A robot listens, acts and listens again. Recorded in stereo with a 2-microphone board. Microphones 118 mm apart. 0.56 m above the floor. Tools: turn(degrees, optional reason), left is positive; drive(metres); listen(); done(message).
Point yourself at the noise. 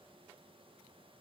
listen()
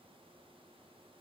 listen()
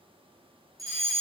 turn(degrees=-30, reason="The fire alarm: about 30° right or 150° right.")
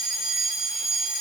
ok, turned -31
done("Found it: a fire alarm, straight ahead.")